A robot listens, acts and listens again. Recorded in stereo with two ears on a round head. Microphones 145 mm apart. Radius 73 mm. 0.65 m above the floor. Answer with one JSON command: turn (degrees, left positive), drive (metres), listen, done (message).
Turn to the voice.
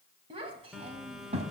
{"turn": -40}
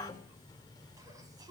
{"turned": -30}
{"turn": -25}
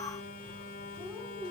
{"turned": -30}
{"done": "Found it: a child speaking, straight ahead, 2 to 4 m away."}